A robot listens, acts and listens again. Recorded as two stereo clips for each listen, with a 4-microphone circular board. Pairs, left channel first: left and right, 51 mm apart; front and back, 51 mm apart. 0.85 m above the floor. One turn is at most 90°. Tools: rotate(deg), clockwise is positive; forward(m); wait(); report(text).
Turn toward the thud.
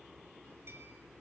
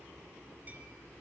wait()
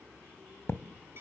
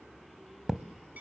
rotate(-90)
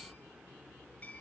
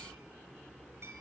rotate(-10)
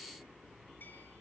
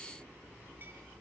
report("I heard a thud from this way, but can't make it out now.")